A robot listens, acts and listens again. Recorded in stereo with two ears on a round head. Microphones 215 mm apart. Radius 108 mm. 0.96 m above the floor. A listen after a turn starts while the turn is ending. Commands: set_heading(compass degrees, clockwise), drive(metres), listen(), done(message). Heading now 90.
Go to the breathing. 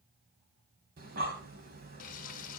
set_heading(130)
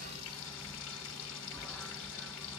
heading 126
drive(1.0)
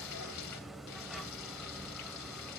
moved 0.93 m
drive(1.0)
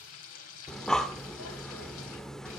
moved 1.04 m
drive(1.0)
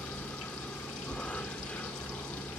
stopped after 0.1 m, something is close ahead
done("I am next to the breathing.")